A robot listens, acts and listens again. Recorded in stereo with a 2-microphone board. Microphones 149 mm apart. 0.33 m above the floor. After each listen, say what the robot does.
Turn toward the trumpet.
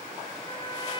Keep listening.
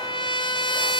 Turn 30° left.
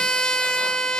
Facing the trumpet.